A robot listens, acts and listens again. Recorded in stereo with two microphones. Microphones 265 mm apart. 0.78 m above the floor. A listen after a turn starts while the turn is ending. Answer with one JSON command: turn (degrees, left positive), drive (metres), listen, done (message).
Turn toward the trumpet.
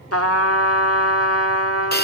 {"turn": 60}
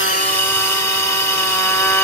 {"listen": true}
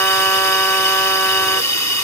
{"listen": true}
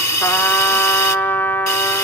{"done": "Facing the trumpet, 1 to 2 m away."}